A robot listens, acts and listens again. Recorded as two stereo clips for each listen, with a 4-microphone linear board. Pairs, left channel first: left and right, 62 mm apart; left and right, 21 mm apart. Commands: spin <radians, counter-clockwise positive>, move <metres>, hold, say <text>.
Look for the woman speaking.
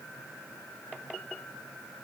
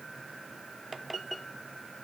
hold
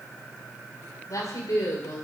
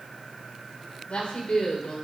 spin 1.13
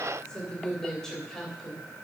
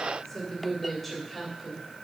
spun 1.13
say Found it: a woman speaking, straight ahead.